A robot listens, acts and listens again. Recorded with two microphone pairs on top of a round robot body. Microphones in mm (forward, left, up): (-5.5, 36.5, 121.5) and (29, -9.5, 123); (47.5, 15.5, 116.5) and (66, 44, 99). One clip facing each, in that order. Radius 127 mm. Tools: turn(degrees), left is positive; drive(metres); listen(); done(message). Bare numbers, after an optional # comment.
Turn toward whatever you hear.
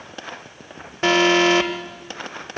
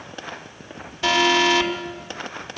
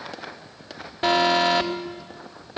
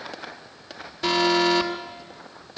# The alarm: 170° left.
turn(170)
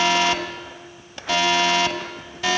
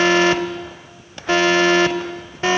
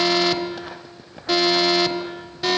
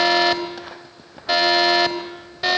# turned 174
done("Found it: an alarm, straight ahead.")